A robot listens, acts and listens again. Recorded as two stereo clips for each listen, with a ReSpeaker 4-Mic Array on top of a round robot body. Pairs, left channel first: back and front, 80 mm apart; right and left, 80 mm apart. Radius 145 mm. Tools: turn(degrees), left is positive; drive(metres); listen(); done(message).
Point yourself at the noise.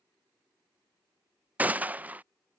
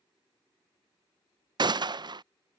turn(degrees=70)
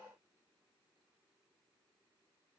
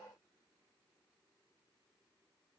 done("I heard a gunshot from this way, but can't make it out now.")